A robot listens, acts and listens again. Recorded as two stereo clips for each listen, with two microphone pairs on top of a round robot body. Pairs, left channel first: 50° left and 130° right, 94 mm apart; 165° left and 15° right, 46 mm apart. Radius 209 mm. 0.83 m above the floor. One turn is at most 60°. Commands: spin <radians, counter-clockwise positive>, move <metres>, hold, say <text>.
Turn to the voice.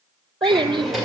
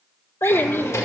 spin -1.05
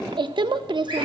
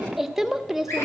spin -1.05
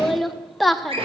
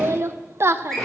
spin -0.70
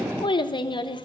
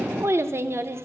spin 0.26
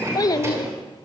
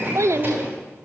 say Found it: a child speaking, straight ahead, under 1 m away.